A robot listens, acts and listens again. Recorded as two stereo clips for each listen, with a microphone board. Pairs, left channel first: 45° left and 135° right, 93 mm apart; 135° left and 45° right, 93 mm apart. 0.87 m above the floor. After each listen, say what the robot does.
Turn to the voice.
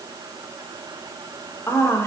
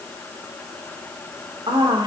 Turn 15° right.
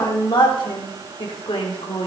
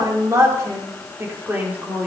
Turn 30° left.
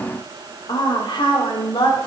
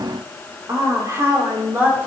Turn 20° left.
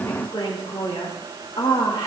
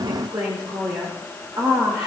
Facing the woman speaking, 2 to 4 m away.